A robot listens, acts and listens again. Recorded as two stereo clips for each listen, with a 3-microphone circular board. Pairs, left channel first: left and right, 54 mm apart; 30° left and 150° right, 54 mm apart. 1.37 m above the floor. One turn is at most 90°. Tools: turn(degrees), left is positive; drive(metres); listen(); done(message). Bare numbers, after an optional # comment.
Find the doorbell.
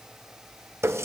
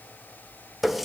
listen()
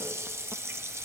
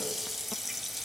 listen()
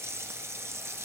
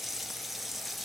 done("I can't make out a doorbell to turn to.")